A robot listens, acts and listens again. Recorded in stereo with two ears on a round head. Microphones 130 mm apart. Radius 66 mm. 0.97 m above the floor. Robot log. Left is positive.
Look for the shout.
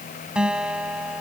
cmd idle
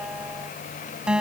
cmd idle
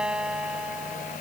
end: I can't make out a shout, only a guitar.